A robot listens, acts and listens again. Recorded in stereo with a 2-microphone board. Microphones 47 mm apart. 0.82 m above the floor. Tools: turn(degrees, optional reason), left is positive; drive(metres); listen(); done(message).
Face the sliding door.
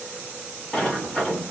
turn(degrees=30)
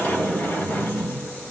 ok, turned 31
turn(degrees=140, reason="So it is at 140° left.")
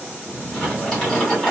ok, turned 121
turn(degrees=20, reason="The sliding door is now 20° left.")
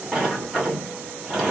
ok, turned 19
done("Found it: a sliding door, straight ahead.")